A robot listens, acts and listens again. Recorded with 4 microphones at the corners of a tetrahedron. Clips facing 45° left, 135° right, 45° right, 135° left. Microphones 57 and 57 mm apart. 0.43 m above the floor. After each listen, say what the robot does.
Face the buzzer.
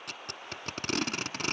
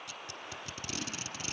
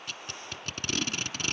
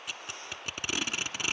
Keep listening.
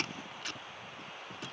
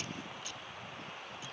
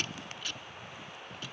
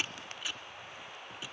Keep listening.
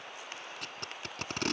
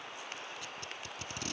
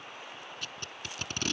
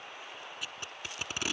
I can't make out a buzzer to turn to.